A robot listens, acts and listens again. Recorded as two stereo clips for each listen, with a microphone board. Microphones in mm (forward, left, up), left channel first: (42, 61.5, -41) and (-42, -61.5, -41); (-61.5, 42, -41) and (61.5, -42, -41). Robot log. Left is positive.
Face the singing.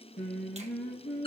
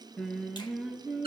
note: The singing: 45° left.
cmd yaw +45
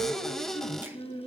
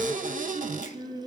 end: Facing the singing, 2 to 4 m away.